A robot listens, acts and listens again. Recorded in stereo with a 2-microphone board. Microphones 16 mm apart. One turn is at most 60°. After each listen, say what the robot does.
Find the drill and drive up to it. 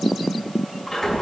Keep listening.
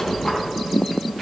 Keep listening.
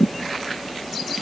I can't make out a drill, only a squeak.